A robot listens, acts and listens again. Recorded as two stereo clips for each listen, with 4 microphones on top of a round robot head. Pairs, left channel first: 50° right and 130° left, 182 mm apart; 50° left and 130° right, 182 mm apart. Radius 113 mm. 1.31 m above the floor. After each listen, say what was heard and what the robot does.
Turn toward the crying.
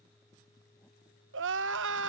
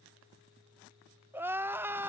The crying: 155° left. Turn 155° left.
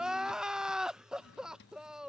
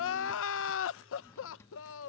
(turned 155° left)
The crying is now 40° left. Turn 40° left.
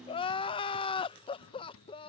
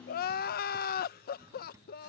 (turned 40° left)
The crying is now 10° left. Turn 10° left.
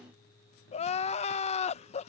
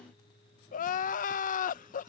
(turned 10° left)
Facing the crying.